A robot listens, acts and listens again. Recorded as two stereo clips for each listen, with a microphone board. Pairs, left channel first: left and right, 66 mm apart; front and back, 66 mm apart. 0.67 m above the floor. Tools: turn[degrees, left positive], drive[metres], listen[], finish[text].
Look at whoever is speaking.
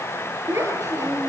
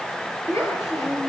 Thought: The child speaking: 40° right.
Action: turn[-40]
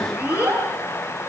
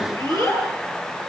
Thought: The child speaking is now 20° right.
Action: turn[-20]
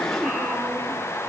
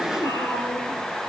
Action: listen[]
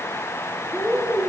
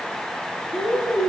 Action: finish[Found it: a child speaking, straight ahead.]